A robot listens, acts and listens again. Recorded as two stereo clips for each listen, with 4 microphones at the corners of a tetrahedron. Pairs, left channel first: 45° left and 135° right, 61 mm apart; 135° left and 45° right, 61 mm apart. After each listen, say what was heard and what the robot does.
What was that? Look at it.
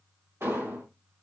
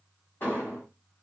The explosion: 175° right. Turn 175° right.
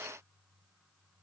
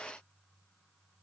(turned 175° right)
Facing where the explosion came from. I can't hear it now.